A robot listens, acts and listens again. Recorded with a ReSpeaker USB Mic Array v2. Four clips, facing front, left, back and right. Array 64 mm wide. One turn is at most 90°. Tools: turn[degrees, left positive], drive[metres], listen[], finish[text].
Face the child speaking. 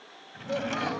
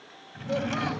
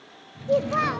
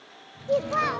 Thought: The child speaking: 140° right.
Action: turn[-90]
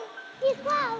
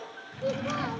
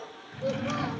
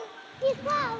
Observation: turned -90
Thought: The child speaking is now 30° right.
Action: turn[-30]
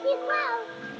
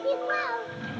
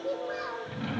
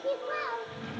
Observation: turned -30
Thought: The child speaking is now 20° left.
Action: turn[20]
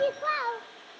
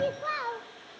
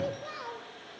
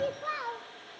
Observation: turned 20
Thought: The child speaking is now 15° left.
Action: turn[15]
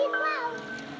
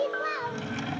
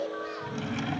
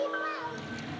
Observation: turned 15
Thought: The child speaking is now 25° left.
Action: turn[25]
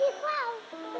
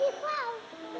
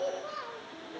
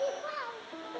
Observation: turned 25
Thought: The child speaking is now 25° left.
Action: turn[25]
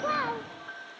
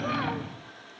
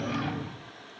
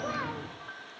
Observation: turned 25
Action: listen[]
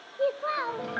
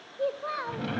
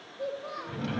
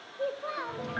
Action: finish[Found it: a child speaking, straight ahead, 1 to 2 m away.]